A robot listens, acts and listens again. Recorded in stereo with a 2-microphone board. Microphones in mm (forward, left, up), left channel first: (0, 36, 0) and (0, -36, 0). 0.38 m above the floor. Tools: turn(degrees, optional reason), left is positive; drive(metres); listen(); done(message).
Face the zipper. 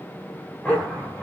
turn(degrees=30)
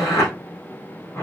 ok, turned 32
turn(degrees=140, reason="So it is at 140° left.")
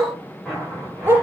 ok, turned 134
done("Facing the zipper.")